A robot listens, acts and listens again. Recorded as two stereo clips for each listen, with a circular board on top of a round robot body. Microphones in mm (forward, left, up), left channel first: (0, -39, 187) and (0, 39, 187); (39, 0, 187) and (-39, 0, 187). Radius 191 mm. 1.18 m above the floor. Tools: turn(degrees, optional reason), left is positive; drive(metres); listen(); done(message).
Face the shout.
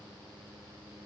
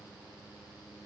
listen()
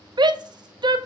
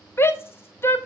turn(degrees=60, reason="The shout: 60° left.")
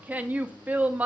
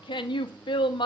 turn(degrees=20, reason="The shout is now 20° left.")
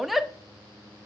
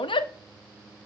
done("Found it: a shout, straight ahead, under 1 m away.")